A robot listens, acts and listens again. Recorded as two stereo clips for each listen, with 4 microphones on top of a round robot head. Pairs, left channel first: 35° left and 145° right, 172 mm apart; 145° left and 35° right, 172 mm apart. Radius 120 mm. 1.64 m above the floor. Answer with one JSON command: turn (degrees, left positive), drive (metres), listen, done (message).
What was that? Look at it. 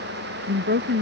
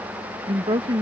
{"turn": -100}
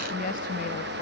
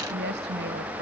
{"listen": true}
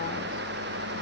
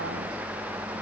{"listen": true}
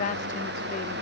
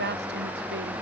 {"turn": -10}
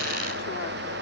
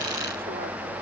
{"listen": true}
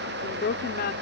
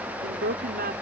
{"done": "Facing the woman speaking."}